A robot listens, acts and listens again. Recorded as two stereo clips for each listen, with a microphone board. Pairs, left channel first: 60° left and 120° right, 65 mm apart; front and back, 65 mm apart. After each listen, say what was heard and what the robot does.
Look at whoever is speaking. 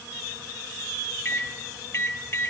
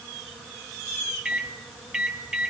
Keep listening.
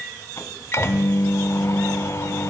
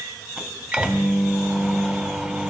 Keep listening.
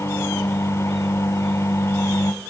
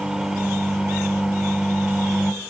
I can't make out anyone speaking, only a microwave.